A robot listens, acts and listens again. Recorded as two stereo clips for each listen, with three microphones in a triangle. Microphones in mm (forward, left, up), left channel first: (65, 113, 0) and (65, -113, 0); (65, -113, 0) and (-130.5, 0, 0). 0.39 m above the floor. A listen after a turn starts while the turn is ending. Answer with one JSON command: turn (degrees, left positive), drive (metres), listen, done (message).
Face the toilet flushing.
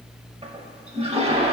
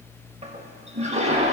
{"turn": -150}
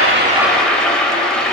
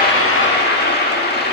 {"done": "Facing the toilet flushing, under 1 m away."}